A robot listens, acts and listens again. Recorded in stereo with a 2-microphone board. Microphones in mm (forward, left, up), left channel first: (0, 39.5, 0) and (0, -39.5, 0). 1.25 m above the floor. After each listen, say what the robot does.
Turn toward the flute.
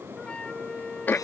Turn 30° left.
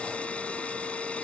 Keep listening.
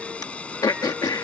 Keep listening.
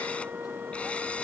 Turn 20° right.
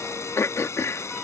Keep listening.
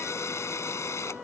Keep listening.
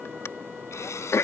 Facing where the flute came from. I can't hear it now.